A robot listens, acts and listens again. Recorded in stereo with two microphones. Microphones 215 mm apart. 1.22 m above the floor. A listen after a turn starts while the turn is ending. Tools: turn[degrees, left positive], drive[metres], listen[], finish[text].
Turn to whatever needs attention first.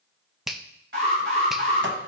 Thought: The alarm: about 65° right or 115° right.
Action: turn[-65]
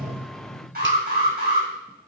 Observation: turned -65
Thought: So it is at 50° right.
Action: turn[-50]
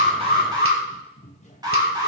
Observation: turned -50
Thought: The alarm is now 20° right.
Action: turn[-20]
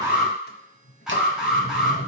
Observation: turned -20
Action: finish[Found it: an alarm, straight ahead, over 4 m away.]